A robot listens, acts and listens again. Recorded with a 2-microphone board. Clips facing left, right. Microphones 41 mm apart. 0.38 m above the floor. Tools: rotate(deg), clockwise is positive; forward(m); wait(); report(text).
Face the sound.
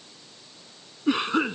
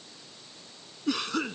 rotate(-25)
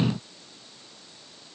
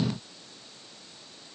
wait()
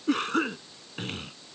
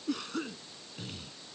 rotate(-130)
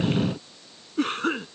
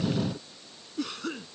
rotate(-50)
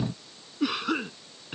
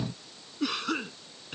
rotate(-10)
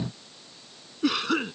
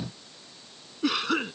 report("Found it: a cough, straight ahead.")